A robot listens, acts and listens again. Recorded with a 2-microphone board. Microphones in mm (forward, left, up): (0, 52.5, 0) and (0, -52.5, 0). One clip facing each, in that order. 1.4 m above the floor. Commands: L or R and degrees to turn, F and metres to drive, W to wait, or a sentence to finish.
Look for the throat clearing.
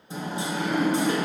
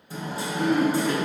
R45
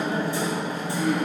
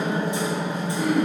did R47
R85
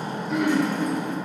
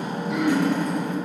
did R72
R15
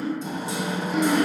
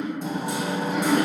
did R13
Found it: throat clearing, straight ahead, 1 to 2 m away.